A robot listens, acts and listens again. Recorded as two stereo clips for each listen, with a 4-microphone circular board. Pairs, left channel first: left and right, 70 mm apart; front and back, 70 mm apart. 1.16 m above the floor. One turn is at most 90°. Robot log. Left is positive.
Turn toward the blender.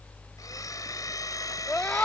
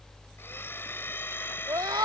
note: The blender: 55° left.
cmd yaw +55
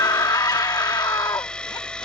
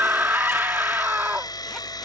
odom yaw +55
note: The blender is now 10° left.
cmd yaw +10
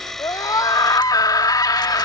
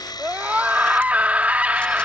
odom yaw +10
end: Found it: a blender, straight ahead.